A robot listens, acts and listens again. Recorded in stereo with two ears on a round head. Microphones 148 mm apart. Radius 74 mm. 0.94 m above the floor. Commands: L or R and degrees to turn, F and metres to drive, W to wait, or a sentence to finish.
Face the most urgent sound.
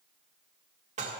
W
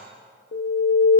L70
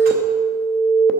Facing the alarm, under 1 m away.